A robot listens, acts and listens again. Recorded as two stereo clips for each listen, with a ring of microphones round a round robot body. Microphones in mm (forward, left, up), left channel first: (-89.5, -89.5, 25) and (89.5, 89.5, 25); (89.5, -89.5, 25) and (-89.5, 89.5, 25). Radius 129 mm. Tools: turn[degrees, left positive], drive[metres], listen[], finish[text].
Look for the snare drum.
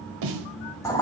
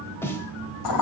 Thought: The snare drum: 35° left.
Action: turn[35]
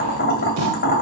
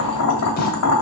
Action: listen[]
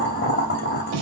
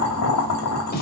Thought: The snare drum is now 15° left.
Action: turn[15]
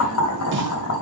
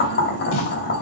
Action: listen[]
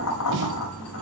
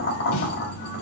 Action: listen[]
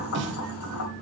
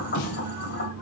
Action: finish[Found it: a snare drum, straight ahead, 1 to 2 m away.]